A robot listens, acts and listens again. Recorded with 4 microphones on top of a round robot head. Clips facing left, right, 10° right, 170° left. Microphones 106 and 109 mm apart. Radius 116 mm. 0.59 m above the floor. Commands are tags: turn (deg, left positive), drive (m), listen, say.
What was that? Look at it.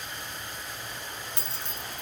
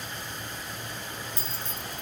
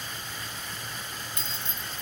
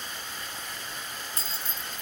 <turn deg="120"/>
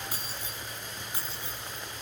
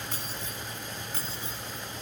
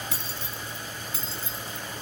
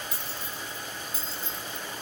<turn deg="15"/>
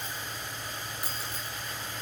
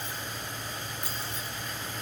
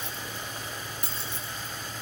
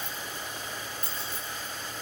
<say>Found it: keys jangling, straight ahead.</say>